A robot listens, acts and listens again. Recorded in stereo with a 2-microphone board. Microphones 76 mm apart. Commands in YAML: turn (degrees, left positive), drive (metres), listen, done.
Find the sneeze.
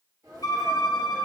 turn: -50
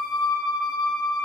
listen: true
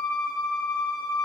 done: "I heard a sneeze, but can't make it out now. It was about straight ahead or 80° right."